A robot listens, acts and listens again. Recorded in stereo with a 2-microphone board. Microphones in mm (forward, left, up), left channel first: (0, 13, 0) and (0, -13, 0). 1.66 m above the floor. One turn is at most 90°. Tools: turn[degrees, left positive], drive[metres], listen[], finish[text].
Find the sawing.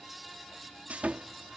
Action: turn[-90]
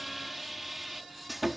Action: finish[Found it: sawing, straight ahead.]